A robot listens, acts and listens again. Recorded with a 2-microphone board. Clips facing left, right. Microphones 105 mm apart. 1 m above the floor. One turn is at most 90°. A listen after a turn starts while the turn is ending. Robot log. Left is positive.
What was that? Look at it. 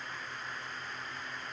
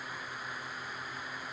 cmd idle
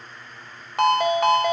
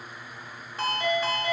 note: The ringtone: about 70° left or 110° left.
cmd yaw +70
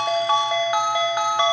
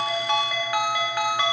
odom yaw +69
note: So it is at 25° left.
cmd yaw +25
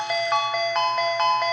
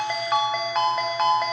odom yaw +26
end: Found it: a ringtone, straight ahead.